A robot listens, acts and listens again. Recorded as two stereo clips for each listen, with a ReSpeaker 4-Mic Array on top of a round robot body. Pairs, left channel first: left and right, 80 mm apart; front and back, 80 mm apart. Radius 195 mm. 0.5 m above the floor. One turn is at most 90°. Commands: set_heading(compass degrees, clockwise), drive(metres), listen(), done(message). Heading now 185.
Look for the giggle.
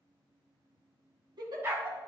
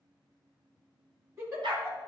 set_heading(275)
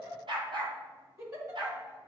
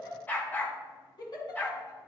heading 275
set_heading(310)
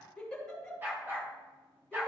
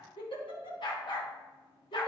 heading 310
set_heading(300)
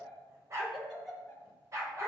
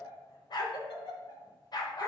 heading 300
done("Found it: a giggle, straight ahead.")